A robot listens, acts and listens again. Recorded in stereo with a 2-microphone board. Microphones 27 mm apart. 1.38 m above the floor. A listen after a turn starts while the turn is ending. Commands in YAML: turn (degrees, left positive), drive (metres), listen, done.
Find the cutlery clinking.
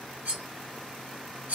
turn: -60
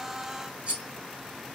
turn: -45
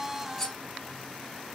turn: 10
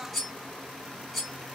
done: "Found it: cutlery clinking, straight ahead."